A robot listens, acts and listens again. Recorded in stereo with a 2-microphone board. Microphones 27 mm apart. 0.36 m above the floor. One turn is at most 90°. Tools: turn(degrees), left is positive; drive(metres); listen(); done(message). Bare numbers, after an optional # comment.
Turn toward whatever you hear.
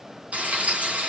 # The frying: about 70° right or 110° right.
turn(-70)
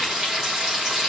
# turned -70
# So it is at 30° right.
turn(-30)
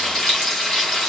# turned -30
done("Found it: frying, straight ahead.")